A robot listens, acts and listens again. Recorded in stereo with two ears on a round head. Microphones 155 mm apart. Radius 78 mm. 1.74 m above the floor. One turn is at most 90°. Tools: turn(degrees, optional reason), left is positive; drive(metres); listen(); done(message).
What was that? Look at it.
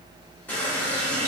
turn(degrees=30)
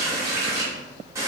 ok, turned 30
turn(degrees=-20, reason="So it is at 20° right.")
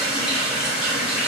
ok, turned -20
done("Facing the running tap.")